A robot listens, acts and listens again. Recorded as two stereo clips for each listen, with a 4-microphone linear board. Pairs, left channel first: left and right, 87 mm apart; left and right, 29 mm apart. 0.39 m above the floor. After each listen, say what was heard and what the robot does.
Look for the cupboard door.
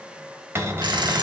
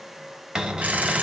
The cupboard door: about 25° right or 155° right. Turn 25° right.
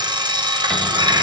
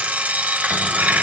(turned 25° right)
Keep listening.
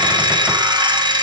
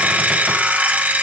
Keep listening.
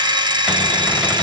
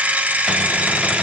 I heard a cupboard door, but can't make it out now. It was about straight ahead or 130° right.